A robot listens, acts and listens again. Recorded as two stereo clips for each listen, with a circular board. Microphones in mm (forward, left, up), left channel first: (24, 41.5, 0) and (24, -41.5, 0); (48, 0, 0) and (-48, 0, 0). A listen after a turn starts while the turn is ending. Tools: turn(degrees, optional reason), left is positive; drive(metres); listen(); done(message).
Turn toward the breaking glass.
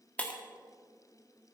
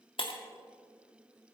turn(degrees=15, reason="The breaking glass: 15° left.")
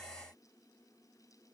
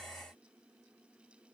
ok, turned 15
done("Facing where the breaking glass came from. I can't hear it now.")